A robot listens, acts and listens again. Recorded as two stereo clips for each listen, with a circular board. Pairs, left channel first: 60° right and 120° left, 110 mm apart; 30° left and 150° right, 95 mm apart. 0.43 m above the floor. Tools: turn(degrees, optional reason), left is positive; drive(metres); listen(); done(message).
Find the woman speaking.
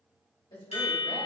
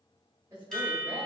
turn(degrees=-95, reason="The woman speaking: 95° right.")
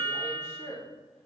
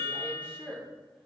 turn(degrees=-45, reason="The woman speaking is now 45° right.")
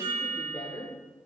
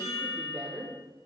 turn(degrees=-120, reason="The woman speaking is now 120° right.")
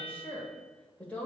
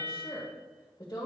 turn(degrees=10, reason="The woman speaking is now 10° left.")
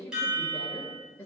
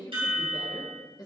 done("Facing the woman speaking.")